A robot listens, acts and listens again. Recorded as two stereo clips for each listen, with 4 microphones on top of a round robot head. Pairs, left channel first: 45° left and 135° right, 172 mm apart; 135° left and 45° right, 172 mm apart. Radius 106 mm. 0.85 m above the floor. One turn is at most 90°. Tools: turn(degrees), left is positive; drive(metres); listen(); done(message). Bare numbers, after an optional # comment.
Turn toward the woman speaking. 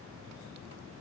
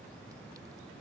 listen()
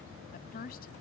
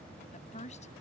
# The woman speaking: 85° left.
turn(85)
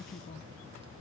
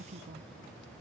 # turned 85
done("Found it: a woman speaking, straight ahead.")